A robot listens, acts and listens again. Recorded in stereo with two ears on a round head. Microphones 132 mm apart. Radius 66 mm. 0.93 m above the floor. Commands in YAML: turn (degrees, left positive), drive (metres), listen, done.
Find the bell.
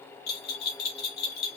turn: 75
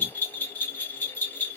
turn: 15
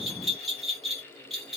done: "Facing the bell."